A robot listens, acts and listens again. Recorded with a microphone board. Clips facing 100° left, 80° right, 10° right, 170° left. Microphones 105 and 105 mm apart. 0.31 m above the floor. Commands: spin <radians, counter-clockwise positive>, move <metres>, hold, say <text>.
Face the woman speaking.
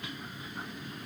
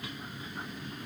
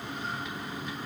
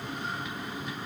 hold
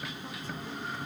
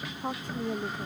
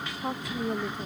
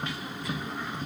spin -0.70
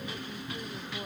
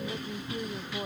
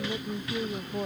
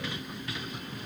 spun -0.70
spin -0.17
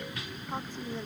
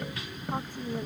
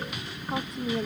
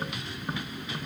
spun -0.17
say Found it: a woman speaking, straight ahead.